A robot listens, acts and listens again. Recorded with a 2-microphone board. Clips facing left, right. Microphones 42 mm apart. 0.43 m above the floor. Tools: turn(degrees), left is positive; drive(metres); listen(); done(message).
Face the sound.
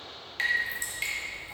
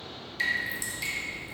turn(degrees=45)
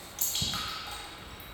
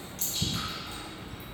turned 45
turn(degrees=85)
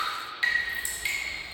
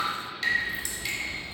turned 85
turn(degrees=20)
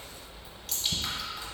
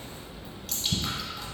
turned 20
done("Found it: dripping, straight ahead.")